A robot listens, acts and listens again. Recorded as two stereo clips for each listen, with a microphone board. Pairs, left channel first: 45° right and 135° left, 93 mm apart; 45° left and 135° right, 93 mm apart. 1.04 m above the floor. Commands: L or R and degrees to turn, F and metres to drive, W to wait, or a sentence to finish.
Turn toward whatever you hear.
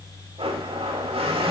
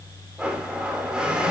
L145
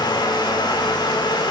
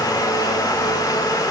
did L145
Facing the blender, 1 to 2 m away.